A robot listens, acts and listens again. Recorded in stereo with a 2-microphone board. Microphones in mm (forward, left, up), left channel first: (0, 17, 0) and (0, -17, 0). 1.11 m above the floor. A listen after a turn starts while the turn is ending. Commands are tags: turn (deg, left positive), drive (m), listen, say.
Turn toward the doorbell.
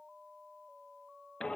<listen/>
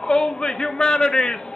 <listen/>
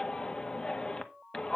<say>I can't make out a doorbell, only a shout.</say>